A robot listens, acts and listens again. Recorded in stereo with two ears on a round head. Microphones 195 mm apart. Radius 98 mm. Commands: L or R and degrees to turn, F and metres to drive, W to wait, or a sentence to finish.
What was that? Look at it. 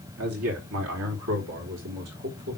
R90
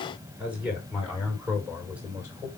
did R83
Found it: a man speaking, straight ahead, over 4 m away.